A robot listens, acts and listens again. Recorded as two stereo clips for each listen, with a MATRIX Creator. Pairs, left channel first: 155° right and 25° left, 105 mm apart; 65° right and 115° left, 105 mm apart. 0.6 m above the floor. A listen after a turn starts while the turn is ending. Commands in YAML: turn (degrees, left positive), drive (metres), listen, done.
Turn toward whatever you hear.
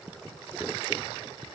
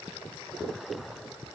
listen: true
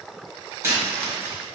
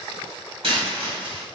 turn: 85
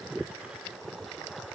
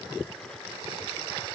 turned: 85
done: "I heard a dropped coin from this way, but can't make it out now."